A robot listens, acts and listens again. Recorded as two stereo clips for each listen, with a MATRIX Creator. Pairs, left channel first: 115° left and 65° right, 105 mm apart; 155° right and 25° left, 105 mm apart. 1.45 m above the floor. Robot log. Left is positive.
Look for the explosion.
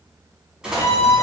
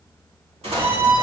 note: The explosion: 15° left.
cmd yaw +15
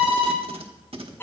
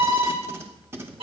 end: Facing where the explosion came from. I can't hear it now.